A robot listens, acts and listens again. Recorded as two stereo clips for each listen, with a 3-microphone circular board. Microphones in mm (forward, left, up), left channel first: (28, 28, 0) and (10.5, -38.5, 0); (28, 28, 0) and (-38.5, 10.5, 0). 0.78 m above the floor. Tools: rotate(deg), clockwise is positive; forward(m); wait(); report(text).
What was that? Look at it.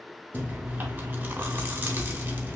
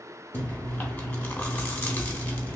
rotate(40)
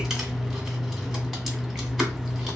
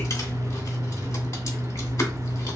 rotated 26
rotate(15)
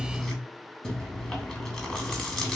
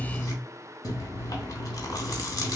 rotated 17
report("Facing the chewing.")